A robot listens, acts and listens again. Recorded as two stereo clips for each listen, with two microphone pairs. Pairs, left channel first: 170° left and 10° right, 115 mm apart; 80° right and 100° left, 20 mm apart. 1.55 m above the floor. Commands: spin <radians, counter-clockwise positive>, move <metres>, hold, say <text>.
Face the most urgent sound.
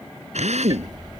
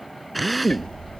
hold
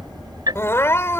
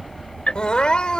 spin -2.09
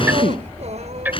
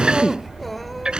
hold
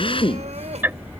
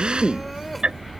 hold
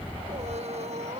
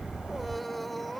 say Facing the crying.